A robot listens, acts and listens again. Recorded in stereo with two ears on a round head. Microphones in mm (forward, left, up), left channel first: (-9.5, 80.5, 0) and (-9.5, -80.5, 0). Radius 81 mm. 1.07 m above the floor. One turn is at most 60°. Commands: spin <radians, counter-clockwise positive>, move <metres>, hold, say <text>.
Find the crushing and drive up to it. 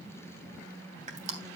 spin -0.70
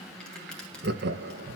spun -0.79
hold
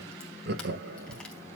hold
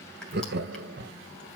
say I heard crushing, but can't make it out now. It was about 5° left or 95° right. I did not reach it.